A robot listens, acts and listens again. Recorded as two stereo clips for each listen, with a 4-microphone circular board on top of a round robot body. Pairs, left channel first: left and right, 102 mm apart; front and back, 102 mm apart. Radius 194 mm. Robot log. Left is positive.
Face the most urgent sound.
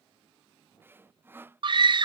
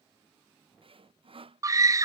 note: The scream: 125° right.
cmd yaw -125
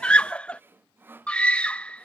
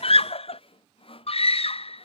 note: The scream is now 10° left.
cmd yaw +10
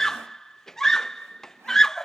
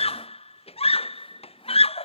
end: Found it: a scream, straight ahead.